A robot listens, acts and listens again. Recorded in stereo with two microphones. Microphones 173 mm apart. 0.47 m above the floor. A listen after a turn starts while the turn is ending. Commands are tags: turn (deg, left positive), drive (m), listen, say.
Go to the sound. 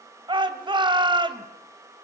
<turn deg="-25"/>
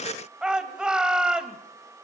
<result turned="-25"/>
<drive m="1.0"/>
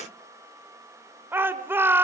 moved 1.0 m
<turn deg="-15"/>
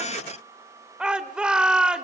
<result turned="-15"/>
<drive m="1.0"/>
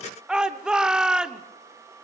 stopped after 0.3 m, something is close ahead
<say>Arrived at the shout, straight ahead.</say>